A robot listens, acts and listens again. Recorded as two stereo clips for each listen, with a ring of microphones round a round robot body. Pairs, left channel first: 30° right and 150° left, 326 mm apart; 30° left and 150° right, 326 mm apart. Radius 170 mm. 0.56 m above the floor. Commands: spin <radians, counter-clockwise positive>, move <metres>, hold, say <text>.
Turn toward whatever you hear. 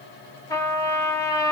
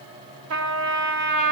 spin -1.92
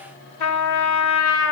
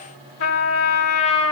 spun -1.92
spin -0.35
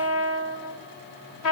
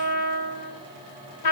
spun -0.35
say Found it: a trumpet, straight ahead.